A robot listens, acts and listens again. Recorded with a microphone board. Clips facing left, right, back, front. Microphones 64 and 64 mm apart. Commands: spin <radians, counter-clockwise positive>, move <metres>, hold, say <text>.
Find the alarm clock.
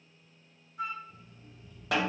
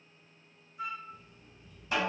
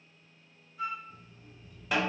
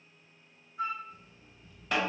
spin 2.27
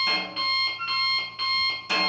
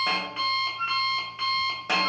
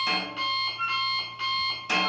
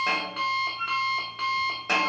spin -0.35
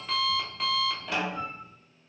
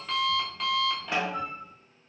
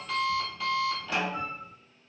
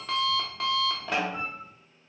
say Facing the alarm clock.